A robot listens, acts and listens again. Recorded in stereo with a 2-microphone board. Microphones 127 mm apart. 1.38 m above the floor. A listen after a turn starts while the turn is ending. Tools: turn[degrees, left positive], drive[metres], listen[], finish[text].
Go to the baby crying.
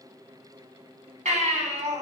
Thought: The baby crying: about 70° right or 110° right.
Action: turn[-70]
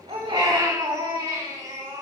Thought: So it is at 30° right.
Action: turn[-30]
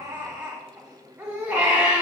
Thought: The baby crying is now 10° right.
Action: turn[-10]
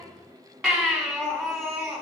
Action: drive[1.0]
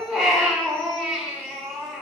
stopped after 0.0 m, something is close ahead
Action: finish[Blocked. The baby crying is further on, straight ahead.]